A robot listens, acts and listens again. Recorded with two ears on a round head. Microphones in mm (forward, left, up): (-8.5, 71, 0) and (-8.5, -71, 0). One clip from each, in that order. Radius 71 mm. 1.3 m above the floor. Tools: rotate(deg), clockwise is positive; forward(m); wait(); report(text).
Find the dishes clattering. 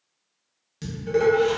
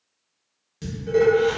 rotate(-15)
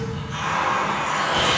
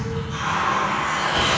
wait()
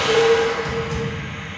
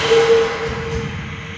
rotate(-145)
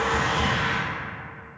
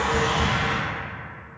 wait()
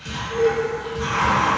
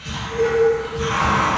rotate(-15)
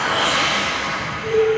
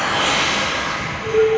report("Facing the dishes clattering, under 1 m away.")